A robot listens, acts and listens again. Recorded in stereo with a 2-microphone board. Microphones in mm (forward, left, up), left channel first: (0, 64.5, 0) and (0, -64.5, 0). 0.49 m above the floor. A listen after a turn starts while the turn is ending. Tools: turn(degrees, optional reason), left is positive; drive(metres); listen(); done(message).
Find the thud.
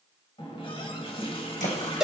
turn(degrees=90)
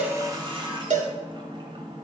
done("Facing where the thud came from. I can't hear it now.")